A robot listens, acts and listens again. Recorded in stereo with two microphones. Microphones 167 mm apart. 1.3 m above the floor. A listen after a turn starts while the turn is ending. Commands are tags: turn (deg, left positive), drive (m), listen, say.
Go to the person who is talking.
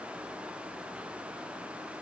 <listen/>
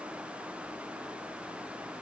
<listen/>
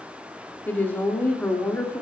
<turn deg="30"/>
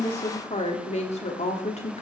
<turn deg="140"/>
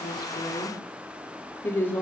<turn deg="15"/>
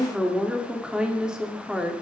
<drive m="1.0"/>
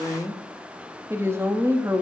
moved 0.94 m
<turn deg="-15"/>
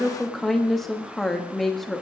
<drive m="1.0"/>
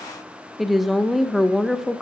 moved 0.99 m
<drive m="1.0"/>
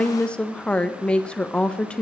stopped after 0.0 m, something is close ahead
<say>Arrived at the woman speaking, straight ahead.</say>